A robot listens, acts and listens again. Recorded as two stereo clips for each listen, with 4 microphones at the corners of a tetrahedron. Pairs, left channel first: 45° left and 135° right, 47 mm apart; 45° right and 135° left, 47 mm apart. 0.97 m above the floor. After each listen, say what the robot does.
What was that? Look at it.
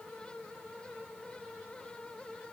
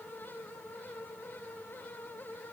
Keep listening.
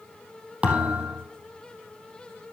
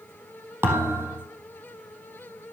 Turn 165° left.
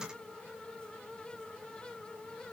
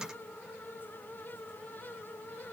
I heard a thud from this way, but can't make it out now.